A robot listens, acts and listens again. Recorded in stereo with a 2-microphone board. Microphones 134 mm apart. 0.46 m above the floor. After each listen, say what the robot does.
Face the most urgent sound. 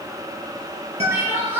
Turn 20° right.
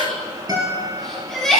Found it: crying, straight ahead, over 4 m away.